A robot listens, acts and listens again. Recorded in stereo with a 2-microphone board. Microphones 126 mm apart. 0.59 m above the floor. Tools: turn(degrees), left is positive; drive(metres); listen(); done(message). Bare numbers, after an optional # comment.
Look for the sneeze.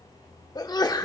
# The sneeze: about 35° left or 145° left.
turn(35)
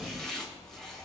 listen()
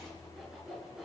done("I heard a sneeze, but can't make it out now. It was about straight ahead or 110° left.")